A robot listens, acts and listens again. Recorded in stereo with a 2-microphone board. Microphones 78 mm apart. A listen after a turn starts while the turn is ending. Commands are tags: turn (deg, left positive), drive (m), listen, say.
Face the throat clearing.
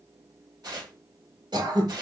<turn deg="-70"/>
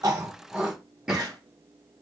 <turn deg="-10"/>
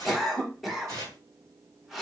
<say>Facing the throat clearing.</say>